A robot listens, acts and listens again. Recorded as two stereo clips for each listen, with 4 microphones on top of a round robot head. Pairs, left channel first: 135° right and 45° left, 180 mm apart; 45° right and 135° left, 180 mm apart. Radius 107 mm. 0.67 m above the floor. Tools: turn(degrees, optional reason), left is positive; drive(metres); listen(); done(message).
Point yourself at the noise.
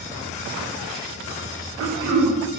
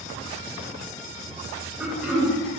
turn(degrees=50, reason="The throat clearing: 50° left.")
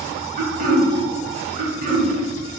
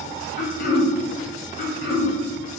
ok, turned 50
done("Found it: throat clearing, straight ahead.")